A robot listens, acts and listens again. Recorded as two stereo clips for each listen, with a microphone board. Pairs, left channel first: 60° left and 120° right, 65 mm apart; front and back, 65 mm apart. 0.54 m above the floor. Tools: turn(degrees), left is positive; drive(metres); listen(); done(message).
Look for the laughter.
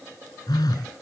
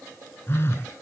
listen()
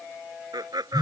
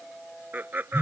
turn(degrees=-120)
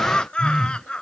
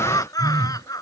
turn(degrees=-20)
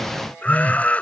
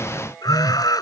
turn(degrees=-10)
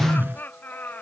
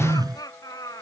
done("Found it: laughter, straight ahead.")